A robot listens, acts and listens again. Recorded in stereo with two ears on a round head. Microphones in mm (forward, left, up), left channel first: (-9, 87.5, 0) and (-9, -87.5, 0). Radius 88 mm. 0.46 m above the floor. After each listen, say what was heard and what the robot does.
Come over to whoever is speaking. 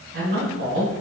The man speaking: about 60° right or 120° right. Turn 60° right.
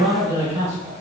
So it is at 20° right. Turn 20° right.
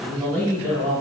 Drive 1.0 m forward.
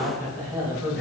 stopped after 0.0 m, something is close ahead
Something is in my way. I am facing the man speaking but have not reached it.